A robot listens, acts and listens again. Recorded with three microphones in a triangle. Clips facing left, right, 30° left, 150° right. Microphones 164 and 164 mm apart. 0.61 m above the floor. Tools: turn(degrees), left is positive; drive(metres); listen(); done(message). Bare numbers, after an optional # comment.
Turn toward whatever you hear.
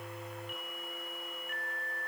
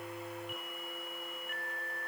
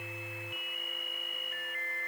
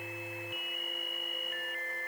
listen()
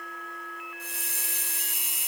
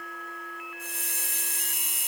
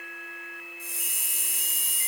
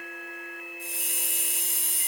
# The hiss: 130° right.
turn(-130)
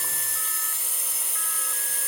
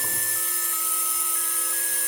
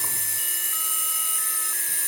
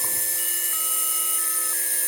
done("Facing the hiss.")